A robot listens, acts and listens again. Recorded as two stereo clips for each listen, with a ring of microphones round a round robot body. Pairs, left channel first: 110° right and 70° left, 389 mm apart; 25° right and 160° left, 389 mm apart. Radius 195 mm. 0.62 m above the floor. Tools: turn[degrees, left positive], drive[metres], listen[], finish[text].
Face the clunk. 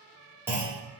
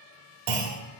Thought: The clunk: 150° left.
Action: turn[150]
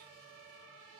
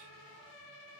Action: finish[Facing where the clunk came from. I can't hear it now.]